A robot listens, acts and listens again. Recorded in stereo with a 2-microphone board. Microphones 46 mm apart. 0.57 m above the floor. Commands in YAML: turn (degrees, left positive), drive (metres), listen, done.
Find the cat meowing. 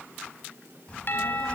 listen: true
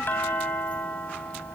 listen: true
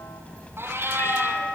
turn: -55
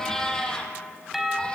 turn: 15
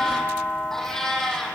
turn: 10
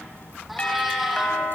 listen: true
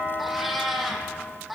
done: "Found it: a cat meowing, straight ahead."